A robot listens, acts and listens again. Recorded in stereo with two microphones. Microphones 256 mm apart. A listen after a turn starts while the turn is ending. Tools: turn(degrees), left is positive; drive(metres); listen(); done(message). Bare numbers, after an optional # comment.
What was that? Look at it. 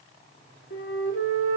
# The flute: about 55° left or 125° left.
turn(55)
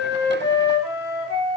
# So it is at 70° left.
turn(70)
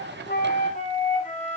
# The flute is now 30° left.
turn(30)
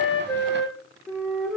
done("Facing the flute, 2 to 4 m away.")